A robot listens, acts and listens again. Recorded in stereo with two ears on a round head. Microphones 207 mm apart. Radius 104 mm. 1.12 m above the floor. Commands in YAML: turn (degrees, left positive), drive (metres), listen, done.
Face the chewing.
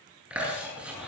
turn: -30
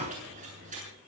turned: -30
turn: -145
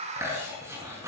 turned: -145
turn: -15
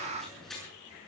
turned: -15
done: "Facing the chewing."